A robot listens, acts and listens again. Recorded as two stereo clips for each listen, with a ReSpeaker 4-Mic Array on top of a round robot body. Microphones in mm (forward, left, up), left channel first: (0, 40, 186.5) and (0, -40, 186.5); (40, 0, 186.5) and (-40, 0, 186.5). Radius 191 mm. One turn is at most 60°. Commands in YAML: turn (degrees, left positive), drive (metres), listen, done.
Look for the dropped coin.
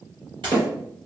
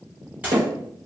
turn: -60
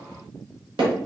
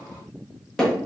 turn: -45
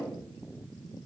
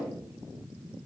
done: "I heard a dropped coin from this way, but can't make it out now."